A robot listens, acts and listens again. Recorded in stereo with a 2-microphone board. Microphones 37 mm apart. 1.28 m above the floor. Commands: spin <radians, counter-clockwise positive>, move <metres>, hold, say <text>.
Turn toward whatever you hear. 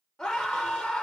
spin 0.35
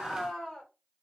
say Facing the scream.